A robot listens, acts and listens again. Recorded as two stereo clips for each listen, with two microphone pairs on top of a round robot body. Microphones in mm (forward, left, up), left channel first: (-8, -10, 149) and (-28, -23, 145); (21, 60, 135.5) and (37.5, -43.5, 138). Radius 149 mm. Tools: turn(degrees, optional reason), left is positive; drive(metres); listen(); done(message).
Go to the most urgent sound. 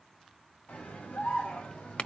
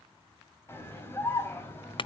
turn(degrees=35, reason="The scream: 35° left.")
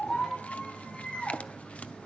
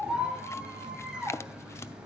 drive(metres=1.0)
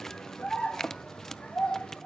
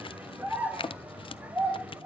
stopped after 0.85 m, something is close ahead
done("Blocked. The scream is further on, straight ahead.")